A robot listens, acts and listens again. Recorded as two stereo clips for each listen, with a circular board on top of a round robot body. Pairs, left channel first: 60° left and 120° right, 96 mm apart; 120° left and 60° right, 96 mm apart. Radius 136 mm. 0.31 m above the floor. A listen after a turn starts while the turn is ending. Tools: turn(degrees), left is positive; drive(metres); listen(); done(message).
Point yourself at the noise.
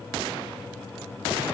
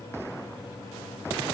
listen()
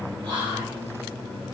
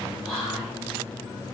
turn(degrees=-150)
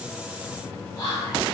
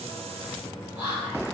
done("Facing the whispering.")